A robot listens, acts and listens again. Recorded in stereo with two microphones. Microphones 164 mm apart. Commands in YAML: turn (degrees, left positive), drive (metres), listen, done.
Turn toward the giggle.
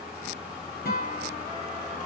listen: true
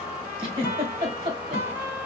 turn: -35
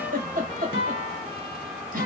turn: -105
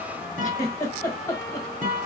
turn: 25
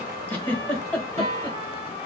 turn: 10
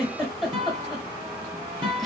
done: "Found it: a giggle, straight ahead."